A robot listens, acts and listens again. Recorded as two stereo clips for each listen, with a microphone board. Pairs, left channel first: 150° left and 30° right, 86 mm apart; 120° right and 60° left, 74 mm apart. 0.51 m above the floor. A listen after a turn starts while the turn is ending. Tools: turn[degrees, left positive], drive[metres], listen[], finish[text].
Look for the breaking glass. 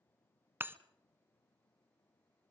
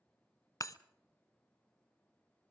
Thought: The breaking glass: 90° right.
Action: turn[-90]
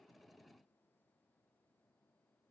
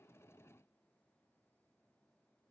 Action: finish[I heard breaking glass from this way, but can't make it out now.]